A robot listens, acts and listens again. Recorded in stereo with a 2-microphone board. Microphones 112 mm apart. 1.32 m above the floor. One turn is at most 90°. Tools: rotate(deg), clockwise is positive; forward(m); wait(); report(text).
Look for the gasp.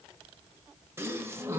rotate(20)
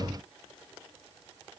wait()
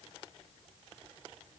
report("I heard a gasp, but can't make it out now. It was about straight ahead or 140° right.")